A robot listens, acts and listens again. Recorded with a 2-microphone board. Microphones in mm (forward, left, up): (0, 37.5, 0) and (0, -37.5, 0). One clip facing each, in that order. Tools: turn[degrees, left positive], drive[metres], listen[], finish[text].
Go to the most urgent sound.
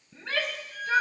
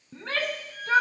Thought: The shout: about 50° right or 130° right.
Action: turn[-50]
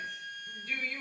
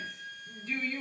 Action: drive[1.0]
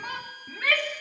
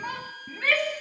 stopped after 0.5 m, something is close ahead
Action: finish[Something is in my way. I am facing the shout but have not reached it.]